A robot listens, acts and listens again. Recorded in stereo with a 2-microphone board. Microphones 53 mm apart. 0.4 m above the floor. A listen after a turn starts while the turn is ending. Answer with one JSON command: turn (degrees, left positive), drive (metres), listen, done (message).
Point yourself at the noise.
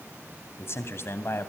{"turn": 50}
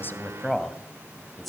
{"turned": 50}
{"done": "Facing the man speaking."}